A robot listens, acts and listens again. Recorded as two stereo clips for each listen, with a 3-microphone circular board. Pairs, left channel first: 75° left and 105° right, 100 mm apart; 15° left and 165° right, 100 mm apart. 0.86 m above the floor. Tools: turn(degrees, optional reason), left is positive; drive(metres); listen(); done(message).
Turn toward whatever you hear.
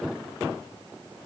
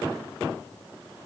listen()
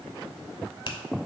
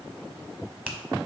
turn(degrees=115, reason="The finger snap: 115° left.")
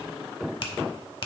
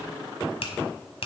turn(degrees=40, reason="The finger snap is now 40° left.")
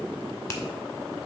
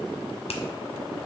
turn(degrees=15, reason="The finger snap is now 15° left.")
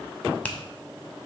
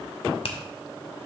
done("Found it: a finger snap, straight ahead, 1 to 2 m away.")